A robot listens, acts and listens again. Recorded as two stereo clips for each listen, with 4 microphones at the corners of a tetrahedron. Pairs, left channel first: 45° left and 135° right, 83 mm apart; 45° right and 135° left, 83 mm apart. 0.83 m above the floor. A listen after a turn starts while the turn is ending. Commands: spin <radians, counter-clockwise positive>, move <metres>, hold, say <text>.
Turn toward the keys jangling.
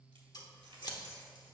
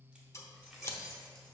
spin -2.27
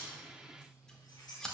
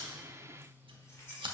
spin 0.26
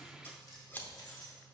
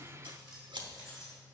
say Facing the keys jangling.